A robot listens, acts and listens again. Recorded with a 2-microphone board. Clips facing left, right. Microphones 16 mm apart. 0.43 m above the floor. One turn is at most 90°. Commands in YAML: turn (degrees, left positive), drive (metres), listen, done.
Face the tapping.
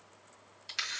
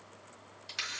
listen: true
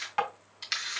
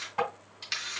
turn: 45
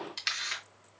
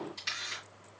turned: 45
listen: true
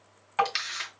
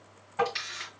turn: 85
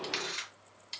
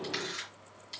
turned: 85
listen: true
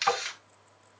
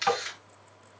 turn: -10
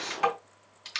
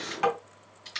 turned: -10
done: "Facing the tapping, 2 to 4 m away."